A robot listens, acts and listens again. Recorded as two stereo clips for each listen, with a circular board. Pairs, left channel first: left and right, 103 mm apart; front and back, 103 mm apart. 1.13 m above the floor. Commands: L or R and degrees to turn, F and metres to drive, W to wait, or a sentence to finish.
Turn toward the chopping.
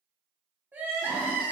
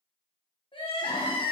W
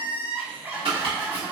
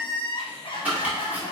R105
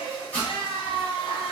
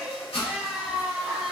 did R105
L15
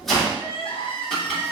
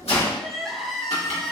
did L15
Facing the chopping, 1 to 2 m away.